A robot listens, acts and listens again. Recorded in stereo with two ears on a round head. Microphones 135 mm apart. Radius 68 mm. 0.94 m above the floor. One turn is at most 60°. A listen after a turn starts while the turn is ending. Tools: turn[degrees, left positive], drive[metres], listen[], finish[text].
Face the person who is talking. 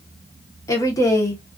Thought: The woman speaking: about 20° left or 160° left.
Action: turn[20]
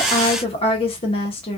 Thought: So it is at 140° left.
Action: turn[60]
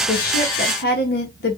Thought: The woman speaking is now 80° left.
Action: turn[60]
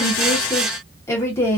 Thought: The woman speaking is now 20° left.
Action: turn[20]
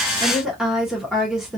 Action: finish[Found it: a woman speaking, straight ahead, under 1 m away.]